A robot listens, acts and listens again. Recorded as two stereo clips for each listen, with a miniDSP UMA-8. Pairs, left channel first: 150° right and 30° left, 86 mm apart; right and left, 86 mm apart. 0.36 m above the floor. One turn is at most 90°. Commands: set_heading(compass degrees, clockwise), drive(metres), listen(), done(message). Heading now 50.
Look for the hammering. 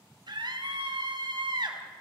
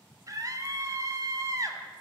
listen()
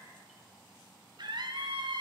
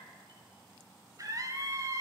listen()
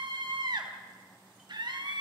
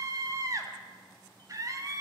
done("I can't make out hammering to turn to.")